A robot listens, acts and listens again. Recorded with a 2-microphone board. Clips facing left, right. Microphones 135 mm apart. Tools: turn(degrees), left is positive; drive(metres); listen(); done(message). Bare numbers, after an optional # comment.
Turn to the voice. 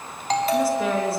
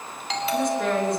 turn(30)
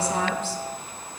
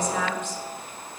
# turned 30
# So it is at 145° left.
turn(145)
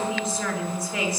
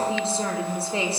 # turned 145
# The woman speaking is now 30° right.
turn(-30)
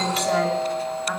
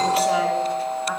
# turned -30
listen()
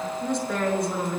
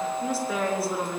done("Found it: a woman speaking, straight ahead.")